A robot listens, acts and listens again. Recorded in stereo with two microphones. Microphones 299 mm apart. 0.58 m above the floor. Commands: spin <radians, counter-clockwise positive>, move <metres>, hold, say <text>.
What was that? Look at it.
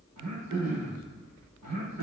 spin -1.13
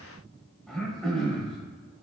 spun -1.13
say Facing the throat clearing, under 1 m away.